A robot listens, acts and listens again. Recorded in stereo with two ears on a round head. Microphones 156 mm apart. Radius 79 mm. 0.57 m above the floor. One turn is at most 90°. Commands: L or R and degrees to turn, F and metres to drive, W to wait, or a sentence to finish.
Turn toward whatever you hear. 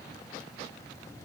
W
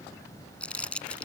L30
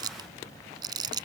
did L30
R25
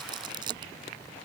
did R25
R25
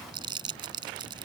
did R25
R30
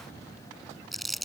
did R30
Facing the crumpling.